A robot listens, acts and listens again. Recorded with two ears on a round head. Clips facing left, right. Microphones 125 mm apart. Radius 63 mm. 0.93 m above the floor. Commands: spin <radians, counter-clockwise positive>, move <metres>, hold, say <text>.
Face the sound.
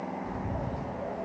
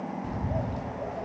spin -1.22
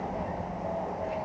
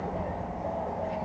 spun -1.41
spin 0.17
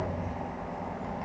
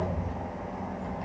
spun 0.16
say Facing the bird.